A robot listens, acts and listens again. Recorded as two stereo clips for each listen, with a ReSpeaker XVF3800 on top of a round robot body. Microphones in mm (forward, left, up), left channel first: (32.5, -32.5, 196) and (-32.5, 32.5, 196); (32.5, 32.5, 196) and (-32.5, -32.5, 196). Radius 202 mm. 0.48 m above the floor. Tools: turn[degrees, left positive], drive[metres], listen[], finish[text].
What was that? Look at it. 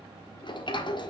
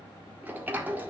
Thought: The sliding door: 65° right.
Action: turn[-65]
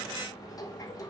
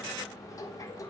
Action: finish[Found it: a sliding door, straight ahead.]